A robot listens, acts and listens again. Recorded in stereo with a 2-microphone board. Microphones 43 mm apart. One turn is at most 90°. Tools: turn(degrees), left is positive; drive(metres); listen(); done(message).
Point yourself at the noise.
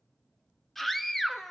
turn(degrees=30)
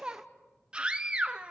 turn(degrees=-25)
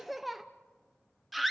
done("Facing the scream.")